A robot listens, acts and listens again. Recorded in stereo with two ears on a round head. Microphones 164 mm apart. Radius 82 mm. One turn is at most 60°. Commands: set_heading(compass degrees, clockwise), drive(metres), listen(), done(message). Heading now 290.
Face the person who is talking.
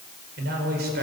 set_heading(345)
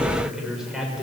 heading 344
done("Found it: a man speaking, straight ahead, over 4 m away.")